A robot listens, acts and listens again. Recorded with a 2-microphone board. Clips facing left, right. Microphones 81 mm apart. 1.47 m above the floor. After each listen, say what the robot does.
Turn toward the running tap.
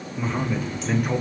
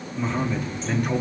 Turn 90° left.
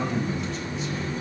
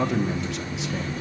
Facing the running tap.